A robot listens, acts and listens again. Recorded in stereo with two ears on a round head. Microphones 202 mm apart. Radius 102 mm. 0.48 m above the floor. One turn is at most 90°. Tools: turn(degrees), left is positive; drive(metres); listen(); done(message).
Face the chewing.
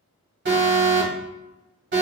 listen()
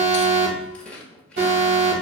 turn(degrees=30)
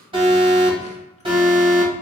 listen()
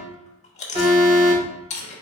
turn(degrees=90)
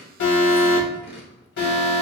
turn(degrees=55)
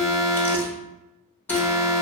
listen()
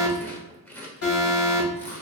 turn(degrees=10)
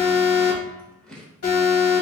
done("Facing the chewing, 1 to 2 m away.")